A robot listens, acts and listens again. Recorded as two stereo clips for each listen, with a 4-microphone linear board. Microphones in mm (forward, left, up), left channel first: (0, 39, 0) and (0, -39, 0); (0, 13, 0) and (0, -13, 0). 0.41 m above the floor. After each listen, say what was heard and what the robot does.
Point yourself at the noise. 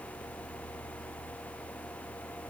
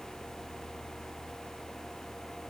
Keep listening.
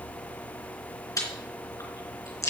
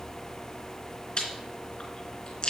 The chewing: about 45° left or 135° left. Turn 45° left.
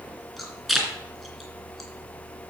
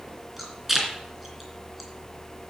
Facing the chewing.